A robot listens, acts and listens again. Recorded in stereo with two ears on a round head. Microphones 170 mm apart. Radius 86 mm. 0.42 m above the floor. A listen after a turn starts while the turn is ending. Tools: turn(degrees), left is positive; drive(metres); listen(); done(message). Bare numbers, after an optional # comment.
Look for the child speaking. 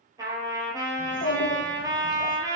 # The child speaking: about 35° left or 145° left.
turn(35)
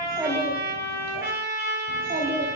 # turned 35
# So it is at 45° right.
turn(-45)
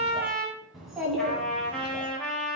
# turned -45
done("Found it: a child speaking, straight ahead, 1 to 2 m away.")